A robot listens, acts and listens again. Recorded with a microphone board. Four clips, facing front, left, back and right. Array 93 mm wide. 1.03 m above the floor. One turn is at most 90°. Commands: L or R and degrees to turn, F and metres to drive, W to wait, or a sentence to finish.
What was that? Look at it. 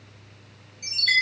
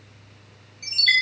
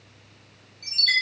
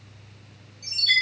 L75
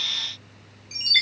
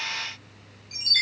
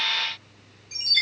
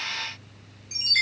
R15
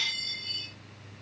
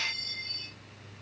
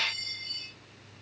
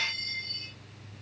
Facing the chime, over 4 m away.